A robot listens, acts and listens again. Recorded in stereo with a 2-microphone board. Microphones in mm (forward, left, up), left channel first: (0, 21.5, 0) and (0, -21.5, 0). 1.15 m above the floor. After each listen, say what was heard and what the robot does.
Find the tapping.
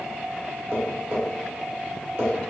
The tapping: about 75° right or 105° right. Turn 75° right.
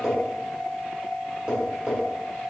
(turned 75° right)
So it is at 20° right. Turn 20° right.
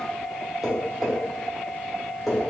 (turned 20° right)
The tapping is now 10° right. Turn 10° right.
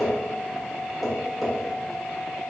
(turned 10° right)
Facing the tapping.